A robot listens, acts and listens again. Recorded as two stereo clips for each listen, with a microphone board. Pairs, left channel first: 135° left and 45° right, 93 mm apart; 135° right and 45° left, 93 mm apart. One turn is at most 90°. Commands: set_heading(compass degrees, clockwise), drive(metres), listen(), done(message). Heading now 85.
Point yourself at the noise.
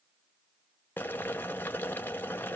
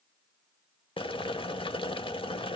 set_heading(175)
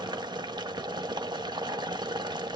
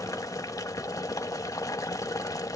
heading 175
set_heading(260)
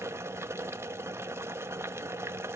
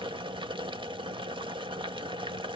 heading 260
set_heading(240)
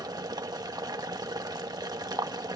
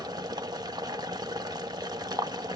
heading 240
done("Facing the boiling.")